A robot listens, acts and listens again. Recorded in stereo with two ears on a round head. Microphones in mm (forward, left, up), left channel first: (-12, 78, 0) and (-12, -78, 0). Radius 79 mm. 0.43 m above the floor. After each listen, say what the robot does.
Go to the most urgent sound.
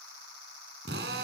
Keep listening.
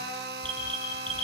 Turn 30° left.
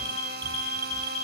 Turn 25° right.
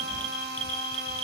Turn 10° left.
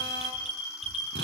Drive 1.0 m forward.
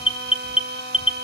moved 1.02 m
Drive 1.0 m forward.
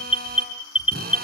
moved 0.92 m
Turn 10° right.
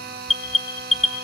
Drive 1.0 m forward.
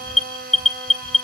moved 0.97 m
Drive 1.0 m forward.
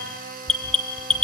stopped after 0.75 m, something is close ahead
I am next to the alarm.